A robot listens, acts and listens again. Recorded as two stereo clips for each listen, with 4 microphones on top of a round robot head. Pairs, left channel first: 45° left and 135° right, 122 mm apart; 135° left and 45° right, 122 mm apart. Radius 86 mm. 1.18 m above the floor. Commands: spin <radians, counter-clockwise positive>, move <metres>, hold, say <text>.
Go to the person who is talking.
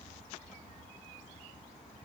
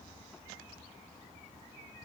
hold
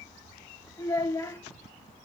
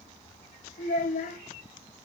spin 2.01
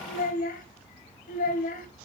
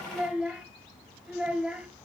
spin 0.70
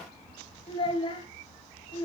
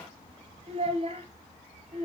move 1.0
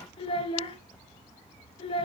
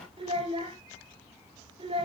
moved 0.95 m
move 1.0
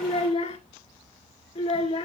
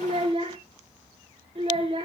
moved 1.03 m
move 1.0
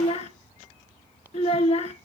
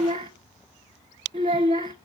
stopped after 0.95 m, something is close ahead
say Arrived at the child speaking, straight ahead.